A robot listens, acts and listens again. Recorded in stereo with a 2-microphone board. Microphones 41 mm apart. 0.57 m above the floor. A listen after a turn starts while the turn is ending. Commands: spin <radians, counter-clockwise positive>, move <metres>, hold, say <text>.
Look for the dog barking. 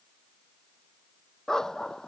spin 0.52
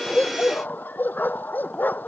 spin 2.27
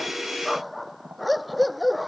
say Facing the dog barking.